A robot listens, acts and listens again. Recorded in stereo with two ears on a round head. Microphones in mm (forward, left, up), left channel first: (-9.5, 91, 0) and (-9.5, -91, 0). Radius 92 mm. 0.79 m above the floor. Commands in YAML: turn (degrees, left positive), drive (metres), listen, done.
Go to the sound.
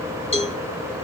turn: 30
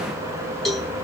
drive: 1.0
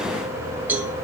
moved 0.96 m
turn: -10
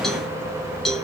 drive: 1.0
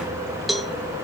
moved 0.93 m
drive: 1.0
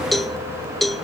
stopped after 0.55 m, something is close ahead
done: "Arrived at the cowbell, straight ahead."